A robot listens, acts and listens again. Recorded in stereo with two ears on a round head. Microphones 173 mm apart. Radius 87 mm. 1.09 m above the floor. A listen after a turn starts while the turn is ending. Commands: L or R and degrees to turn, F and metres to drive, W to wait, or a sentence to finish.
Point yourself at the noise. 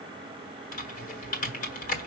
L40
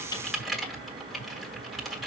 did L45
Found it: typing on a keyboard, straight ahead.